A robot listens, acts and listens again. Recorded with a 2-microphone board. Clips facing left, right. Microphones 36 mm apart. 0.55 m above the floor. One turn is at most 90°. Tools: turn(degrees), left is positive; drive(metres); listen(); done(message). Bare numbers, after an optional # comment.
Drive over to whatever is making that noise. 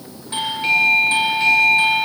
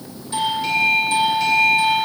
# The doorbell: about 35° left or 145° left.
turn(35)
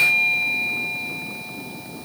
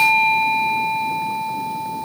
drive(1.0)
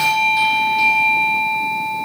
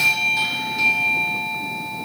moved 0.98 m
drive(1.0)
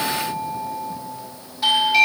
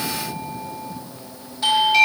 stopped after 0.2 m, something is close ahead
done("Arrived at the doorbell, straight ahead.")